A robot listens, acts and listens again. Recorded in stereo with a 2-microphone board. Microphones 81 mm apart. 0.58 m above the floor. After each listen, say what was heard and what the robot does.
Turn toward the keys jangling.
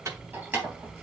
The keys jangling: about 25° right or 155° right. Turn 25° right.
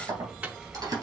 So it is at 125° right. Turn 125° right.
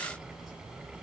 Keep listening.
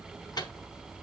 Keep listening.
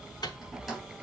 Found it: keys jangling, straight ahead.